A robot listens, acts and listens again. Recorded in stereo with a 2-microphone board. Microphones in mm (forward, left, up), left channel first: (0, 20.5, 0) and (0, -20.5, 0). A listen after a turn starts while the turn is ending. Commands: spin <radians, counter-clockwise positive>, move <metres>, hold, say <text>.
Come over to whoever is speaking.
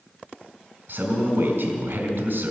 spin -1.13
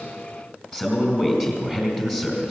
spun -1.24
spin -0.26
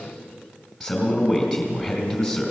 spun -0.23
move 1.0
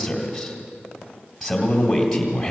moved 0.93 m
move 1.0
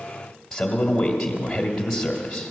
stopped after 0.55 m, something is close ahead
say I am next to the man speaking.